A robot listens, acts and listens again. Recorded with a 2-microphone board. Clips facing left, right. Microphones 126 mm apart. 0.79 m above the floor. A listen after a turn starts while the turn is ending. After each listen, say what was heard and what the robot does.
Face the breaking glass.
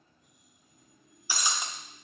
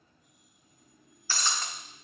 Turn 30° left.
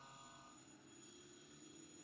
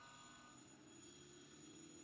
Keep listening.
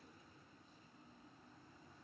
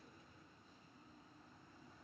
I heard breaking glass, but can't make it out now. It was about 15° right or 135° left.